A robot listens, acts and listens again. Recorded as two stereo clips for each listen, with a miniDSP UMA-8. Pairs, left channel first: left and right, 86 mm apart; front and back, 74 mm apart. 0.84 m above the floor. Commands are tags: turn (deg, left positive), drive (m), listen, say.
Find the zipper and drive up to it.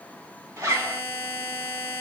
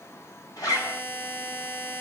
<turn deg="-40"/>
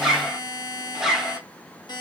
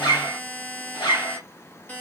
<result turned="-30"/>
<turn deg="-10"/>
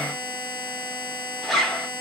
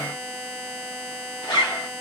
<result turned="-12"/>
<drive m="1.0"/>
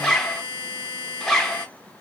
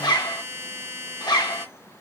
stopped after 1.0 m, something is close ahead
<say>Arrived at the zipper, straight ahead.</say>